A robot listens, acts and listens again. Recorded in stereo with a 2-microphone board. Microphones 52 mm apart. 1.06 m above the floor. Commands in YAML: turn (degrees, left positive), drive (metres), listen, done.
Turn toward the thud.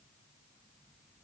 listen: true
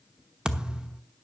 turn: -20
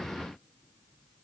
listen: true
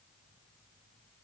done: "I heard a thud, but can't make it out now. It was about straight ahead or 140° right."